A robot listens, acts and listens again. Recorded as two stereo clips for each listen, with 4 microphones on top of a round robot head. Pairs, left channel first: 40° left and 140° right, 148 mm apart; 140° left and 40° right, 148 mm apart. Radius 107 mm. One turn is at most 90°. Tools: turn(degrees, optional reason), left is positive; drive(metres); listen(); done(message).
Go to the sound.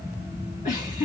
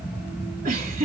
drive(metres=1.0)
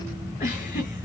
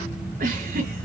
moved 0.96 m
drive(metres=1.0)
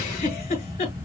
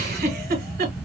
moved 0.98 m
turn(degrees=-10, reason="The giggle is now 10° right.")
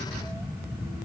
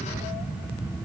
listen()
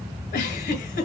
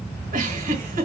drive(metres=1.0)
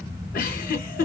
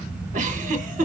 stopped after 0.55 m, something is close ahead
done("I am next to the giggle.")